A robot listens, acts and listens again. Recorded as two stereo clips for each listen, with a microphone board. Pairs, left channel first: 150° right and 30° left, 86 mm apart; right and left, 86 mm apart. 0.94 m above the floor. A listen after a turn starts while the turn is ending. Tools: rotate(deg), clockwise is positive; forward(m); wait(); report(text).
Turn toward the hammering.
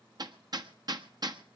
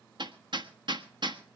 rotate(-65)
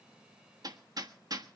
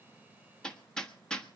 rotate(10)
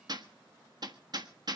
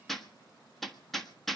report("Facing the hammering.")